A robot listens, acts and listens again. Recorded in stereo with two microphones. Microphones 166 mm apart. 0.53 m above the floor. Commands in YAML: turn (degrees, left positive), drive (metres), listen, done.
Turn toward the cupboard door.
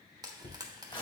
turn: 90
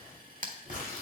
listen: true
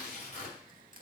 listen: true
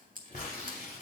done: "Facing where the cupboard door came from. I can't hear it now."